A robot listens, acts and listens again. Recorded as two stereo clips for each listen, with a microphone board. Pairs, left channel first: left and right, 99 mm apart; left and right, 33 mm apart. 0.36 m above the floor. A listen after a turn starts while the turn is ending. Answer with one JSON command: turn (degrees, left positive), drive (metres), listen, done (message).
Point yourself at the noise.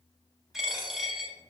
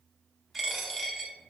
{"turn": -30}
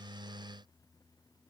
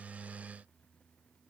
{"listen": true}
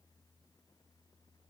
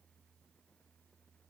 {"done": "I heard a dropped coin, but can't make it out now. It was about 25° left or 145° right."}